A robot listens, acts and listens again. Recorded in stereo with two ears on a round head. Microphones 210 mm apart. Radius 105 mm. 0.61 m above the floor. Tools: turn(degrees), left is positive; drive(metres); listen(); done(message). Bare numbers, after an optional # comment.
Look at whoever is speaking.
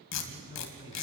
# The man speaking: about 15° right or 165° right.
turn(-15)
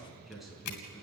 done("Found it: a man speaking, straight ahead.")